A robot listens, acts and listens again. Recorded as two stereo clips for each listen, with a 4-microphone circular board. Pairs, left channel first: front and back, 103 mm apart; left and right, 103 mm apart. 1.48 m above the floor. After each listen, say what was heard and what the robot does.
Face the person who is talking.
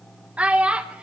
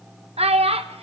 The child speaking: 100° right. Turn 100° right.
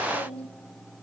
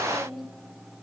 Facing the child speaking.